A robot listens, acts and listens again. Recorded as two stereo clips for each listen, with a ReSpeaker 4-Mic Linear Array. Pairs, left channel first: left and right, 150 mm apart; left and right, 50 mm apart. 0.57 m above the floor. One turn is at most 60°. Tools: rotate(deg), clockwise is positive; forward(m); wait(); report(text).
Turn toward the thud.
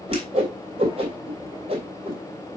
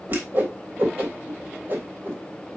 wait()
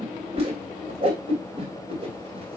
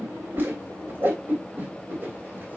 wait()
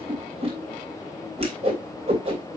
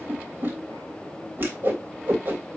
report("I can't make out a thud, only a whoosh.")